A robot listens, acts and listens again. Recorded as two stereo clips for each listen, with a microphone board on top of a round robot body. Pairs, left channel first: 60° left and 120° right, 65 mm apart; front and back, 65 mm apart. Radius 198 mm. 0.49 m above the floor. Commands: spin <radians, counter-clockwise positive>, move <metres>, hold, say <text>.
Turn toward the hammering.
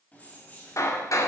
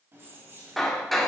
spin 1.48
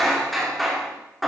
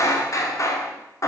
spin -0.52
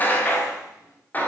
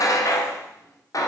say Found it: hammering, straight ahead, 2 to 4 m away.